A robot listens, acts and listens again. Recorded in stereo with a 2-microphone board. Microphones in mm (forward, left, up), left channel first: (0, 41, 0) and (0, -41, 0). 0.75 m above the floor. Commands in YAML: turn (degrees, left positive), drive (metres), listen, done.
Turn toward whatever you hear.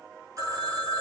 turn: -40
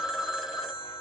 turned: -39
done: "Facing the phone ringing."